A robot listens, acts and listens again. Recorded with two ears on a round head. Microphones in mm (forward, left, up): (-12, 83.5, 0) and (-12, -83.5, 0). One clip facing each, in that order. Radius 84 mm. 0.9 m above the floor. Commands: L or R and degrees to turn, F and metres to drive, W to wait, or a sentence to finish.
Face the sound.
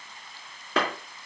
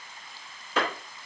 L50
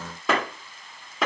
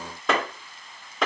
Facing the clap, 2 to 4 m away.